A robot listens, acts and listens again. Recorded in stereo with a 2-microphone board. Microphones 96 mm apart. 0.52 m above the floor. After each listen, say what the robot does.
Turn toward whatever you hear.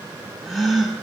Turn 30° left.
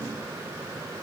Keep listening.
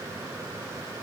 I heard a gasp, but can't make it out now. It was about 30° right or 150° left.